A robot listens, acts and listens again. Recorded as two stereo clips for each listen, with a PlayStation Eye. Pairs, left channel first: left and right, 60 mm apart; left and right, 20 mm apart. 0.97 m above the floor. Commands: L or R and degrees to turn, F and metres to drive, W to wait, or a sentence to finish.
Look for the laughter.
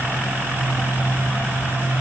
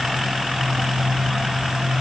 W
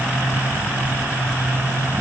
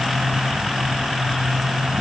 W
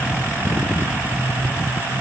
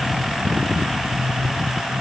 I can't make out laughter to turn to.